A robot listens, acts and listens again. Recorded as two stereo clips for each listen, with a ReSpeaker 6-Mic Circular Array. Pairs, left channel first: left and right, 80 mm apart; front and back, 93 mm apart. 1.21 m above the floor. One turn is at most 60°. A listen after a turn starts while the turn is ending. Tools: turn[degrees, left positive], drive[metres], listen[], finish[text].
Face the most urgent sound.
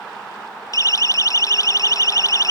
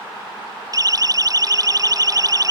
Thought: The siren: 135° left.
Action: turn[60]
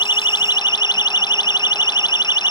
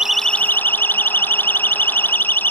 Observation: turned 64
Thought: The siren is now 70° left.
Action: turn[60]
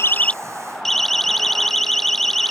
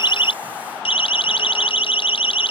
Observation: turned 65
Action: finish[Facing the siren.]